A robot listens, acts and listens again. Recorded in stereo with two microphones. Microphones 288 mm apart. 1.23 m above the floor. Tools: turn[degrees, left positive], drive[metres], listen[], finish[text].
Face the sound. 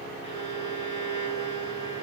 Thought: The violin: about 45° left or 135° left.
Action: turn[45]
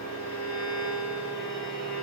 Thought: So it is at 85° left.
Action: turn[85]
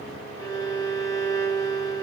Thought: The violin is now 15° left.
Action: turn[15]
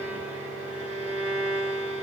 Action: finish[Facing the violin, 2 to 4 m away.]